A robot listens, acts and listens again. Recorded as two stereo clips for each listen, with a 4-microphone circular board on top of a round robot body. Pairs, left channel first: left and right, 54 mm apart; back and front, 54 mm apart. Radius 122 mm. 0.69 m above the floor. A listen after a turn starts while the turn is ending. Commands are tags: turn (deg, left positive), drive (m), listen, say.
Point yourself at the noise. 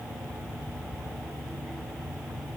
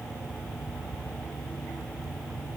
<listen/>
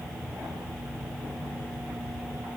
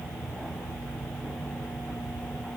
<listen/>
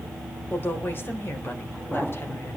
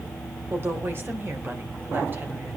<turn deg="45"/>
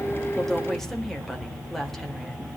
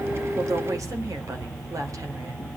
<turn deg="10"/>
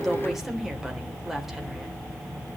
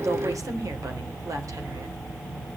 <listen/>
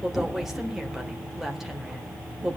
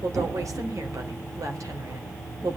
<say>Found it: a woman speaking, straight ahead.</say>